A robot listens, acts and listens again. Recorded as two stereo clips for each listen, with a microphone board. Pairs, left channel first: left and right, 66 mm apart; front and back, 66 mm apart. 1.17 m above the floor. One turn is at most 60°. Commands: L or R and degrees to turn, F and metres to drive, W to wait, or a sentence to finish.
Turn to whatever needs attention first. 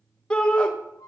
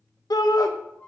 L15
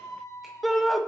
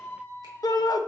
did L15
Found it: a shout, straight ahead.